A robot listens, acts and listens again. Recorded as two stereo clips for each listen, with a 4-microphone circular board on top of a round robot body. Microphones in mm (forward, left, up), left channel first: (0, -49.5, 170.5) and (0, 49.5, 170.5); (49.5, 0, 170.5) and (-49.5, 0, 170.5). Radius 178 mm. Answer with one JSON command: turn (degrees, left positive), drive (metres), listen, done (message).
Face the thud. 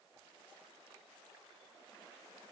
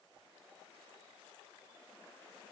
{"listen": true}
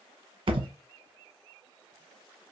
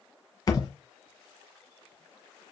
{"turn": 50}
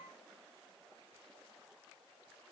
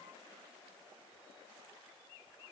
{"done": "I heard a thud from this way, but can't make it out now."}